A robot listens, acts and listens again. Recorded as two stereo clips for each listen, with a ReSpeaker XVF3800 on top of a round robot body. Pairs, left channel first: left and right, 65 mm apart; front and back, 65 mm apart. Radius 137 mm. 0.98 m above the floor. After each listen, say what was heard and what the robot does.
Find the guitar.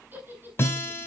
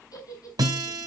The guitar: 145° left. Turn 145° left.
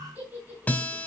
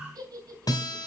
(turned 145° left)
The guitar is now 20° left. Turn 20° left.
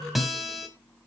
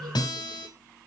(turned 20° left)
Facing the guitar, 2 to 4 m away.